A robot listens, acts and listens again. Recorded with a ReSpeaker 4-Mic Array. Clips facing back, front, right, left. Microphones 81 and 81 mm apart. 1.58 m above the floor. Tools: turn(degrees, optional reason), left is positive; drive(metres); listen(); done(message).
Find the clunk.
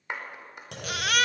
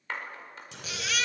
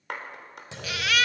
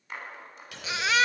turn(degrees=-155, reason="The clunk: 155° right.")
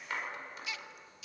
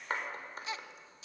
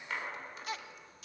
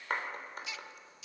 done("I heard a clunk from this way, but can't make it out now.")